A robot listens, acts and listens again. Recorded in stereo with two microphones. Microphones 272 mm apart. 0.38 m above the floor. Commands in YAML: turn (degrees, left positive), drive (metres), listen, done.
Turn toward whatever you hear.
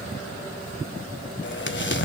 turn: 45
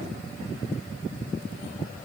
listen: true
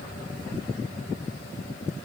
done: "I heard an explosion, but can't make it out now. It was about straight ahead or 90° left."